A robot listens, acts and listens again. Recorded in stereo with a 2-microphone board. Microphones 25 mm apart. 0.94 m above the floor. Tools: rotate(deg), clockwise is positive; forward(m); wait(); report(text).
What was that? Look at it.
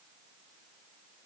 wait()
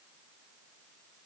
wait()
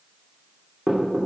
rotate(45)
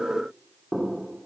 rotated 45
report("Facing the knocking, 2 to 4 m away.")